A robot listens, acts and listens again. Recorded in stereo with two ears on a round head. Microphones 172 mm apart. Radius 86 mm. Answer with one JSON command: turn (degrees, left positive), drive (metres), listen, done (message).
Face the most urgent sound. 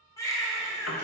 {"turn": 15}
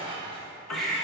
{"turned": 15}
{"done": "Facing the baby crying."}